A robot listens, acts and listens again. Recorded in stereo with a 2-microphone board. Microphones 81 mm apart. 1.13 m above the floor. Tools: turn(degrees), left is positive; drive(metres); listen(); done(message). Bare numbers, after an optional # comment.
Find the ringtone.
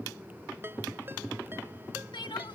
# The ringtone: about 30° right or 150° right.
turn(-30)
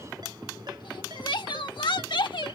listen()
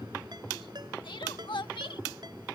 # So it is at 120° right.
turn(-120)
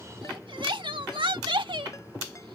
listen()
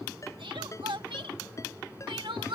# The ringtone is now 40° left.
turn(40)
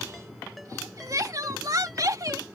listen()
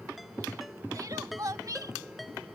done("Facing the ringtone.")